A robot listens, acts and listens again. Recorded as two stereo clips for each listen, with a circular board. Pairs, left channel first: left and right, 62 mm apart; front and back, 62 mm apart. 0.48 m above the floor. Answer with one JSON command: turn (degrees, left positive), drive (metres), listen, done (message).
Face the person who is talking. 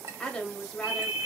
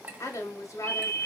{"turn": 10}
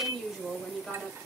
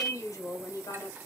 {"done": "Facing the woman speaking."}